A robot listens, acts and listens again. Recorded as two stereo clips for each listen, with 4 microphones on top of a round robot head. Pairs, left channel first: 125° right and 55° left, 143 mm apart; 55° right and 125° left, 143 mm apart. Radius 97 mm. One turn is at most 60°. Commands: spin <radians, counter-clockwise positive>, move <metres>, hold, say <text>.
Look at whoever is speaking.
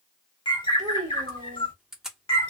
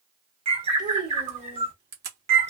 spin 1.05
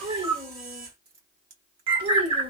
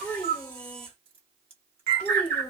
spin 0.52
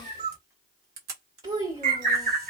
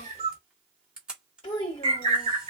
say Facing the child speaking, 1 to 2 m away.